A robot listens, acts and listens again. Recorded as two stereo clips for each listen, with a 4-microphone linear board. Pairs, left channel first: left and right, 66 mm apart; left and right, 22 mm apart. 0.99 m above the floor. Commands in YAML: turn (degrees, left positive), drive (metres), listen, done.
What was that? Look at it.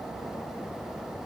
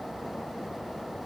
listen: true
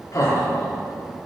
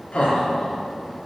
turn: 65
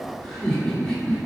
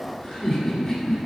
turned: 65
turn: 15
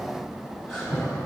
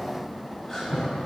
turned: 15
done: "Facing the laughter, 2 to 4 m away."